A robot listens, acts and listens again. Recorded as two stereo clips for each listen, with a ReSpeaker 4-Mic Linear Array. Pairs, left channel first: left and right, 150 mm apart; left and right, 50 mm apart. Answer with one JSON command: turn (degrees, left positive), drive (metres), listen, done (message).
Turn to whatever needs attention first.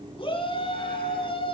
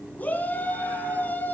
{"turn": 35}
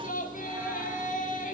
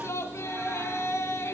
{"turn": 105}
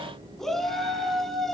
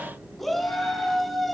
{"done": "Facing the shout."}